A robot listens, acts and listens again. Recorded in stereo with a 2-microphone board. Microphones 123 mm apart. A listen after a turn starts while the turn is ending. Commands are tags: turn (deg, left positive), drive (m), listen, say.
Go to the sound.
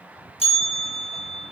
<turn deg="55"/>
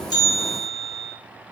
<drive m="1.0"/>
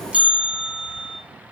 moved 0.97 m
<turn deg="-10"/>
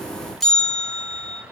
<drive m="1.0"/>
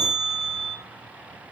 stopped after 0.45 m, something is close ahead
<say>I am next to the bell.</say>